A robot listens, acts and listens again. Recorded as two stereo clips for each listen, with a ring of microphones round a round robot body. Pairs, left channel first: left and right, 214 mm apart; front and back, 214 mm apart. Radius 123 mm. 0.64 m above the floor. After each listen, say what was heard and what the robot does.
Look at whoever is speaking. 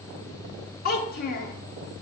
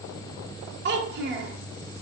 The child speaking: 140° left. Turn 140° left.
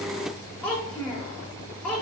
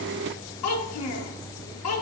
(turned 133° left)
Facing the child speaking, under 1 m away.